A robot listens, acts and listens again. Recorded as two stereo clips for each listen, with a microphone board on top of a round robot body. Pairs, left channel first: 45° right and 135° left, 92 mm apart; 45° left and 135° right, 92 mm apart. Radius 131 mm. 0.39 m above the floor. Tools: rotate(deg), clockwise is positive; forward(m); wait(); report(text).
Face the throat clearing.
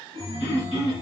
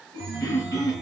report("Found it: throat clearing, straight ahead, 1 to 2 m away.")